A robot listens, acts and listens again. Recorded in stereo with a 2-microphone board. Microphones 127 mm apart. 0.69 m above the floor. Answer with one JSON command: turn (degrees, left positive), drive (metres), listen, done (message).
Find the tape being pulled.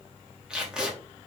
{"turn": -30}
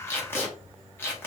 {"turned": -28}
{"turn": 20}
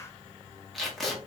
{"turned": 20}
{"done": "Facing the tape being pulled."}